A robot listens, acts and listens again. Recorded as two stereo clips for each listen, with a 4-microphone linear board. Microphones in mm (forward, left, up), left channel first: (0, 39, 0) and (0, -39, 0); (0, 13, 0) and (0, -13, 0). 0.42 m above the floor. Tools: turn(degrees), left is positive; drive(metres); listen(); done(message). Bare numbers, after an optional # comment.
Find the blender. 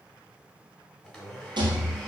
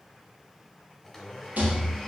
turn(30)
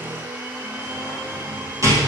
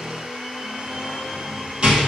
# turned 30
# So it is at 35° right.
turn(-35)
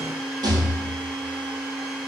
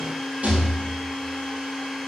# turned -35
# The blender is now 15° right.
turn(-15)
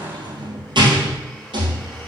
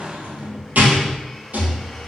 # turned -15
listen()
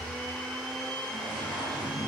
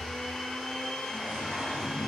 done("Facing the blender, 1 to 2 m away.")